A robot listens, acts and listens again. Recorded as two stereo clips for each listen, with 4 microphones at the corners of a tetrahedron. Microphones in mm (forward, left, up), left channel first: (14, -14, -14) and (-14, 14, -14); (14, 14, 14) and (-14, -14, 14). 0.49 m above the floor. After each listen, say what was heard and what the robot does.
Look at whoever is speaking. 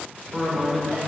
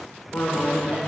The man speaking: 45° left. Turn 45° left.
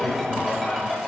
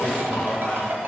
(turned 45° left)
Keep listening.
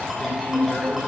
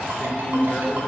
Found it: a man speaking, straight ahead.